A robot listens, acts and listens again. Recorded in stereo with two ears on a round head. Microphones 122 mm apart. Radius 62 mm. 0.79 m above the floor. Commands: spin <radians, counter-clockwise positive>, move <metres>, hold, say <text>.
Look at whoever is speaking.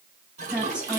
spin -0.52
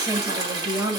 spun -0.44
spin -2.36
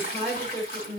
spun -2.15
say Found it: a woman speaking, straight ahead.